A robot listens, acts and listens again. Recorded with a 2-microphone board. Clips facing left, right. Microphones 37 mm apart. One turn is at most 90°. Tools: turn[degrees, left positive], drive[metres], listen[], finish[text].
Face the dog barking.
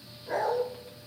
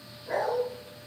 Action: turn[30]
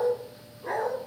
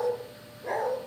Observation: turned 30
Thought: So it is at 135° left.
Action: turn[90]
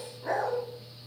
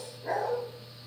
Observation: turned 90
Thought: The dog barking is now 75° left.
Action: turn[75]
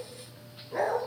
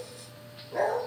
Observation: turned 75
Thought: The dog barking is now 15° left.
Action: turn[15]
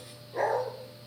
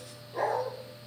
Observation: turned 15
Action: finish[Found it: a dog barking, straight ahead, 2 to 4 m away.]